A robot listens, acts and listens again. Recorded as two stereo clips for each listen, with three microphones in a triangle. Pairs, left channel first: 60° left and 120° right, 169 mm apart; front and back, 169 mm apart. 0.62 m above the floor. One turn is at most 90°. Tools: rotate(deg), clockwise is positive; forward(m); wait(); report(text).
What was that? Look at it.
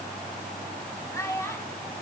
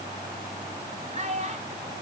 rotate(-90)
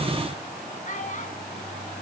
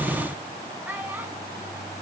rotate(-90)
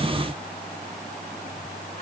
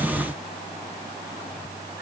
rotate(-10)
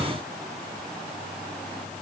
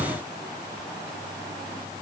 wait()
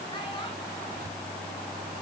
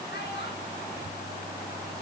report("I heard a child speaking from this way, but can't make it out now.")